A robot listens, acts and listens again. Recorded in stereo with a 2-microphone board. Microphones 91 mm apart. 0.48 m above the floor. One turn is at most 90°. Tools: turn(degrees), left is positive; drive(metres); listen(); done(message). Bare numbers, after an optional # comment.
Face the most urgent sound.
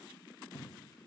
listen()
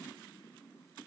listen()
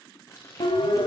# The siren: about 60° left or 120° left.
turn(60)
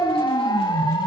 # So it is at 55° left.
turn(55)
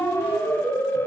# The siren is now 25° left.
turn(25)
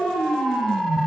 done("Facing the siren, 2 to 4 m away.")